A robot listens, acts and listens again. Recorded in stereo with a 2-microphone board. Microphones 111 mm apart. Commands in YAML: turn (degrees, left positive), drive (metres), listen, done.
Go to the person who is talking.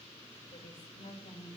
turn: 90
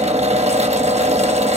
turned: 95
listen: true
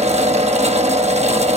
listen: true
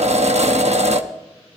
done: "I heard a woman speaking from this way, but can't make it out now. I did not reach it."